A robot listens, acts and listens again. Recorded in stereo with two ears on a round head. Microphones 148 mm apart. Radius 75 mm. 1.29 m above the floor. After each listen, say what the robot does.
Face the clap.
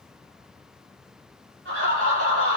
Keep listening.
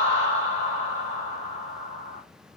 Keep listening.
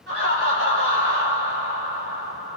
I can't make out a clap, only laughter.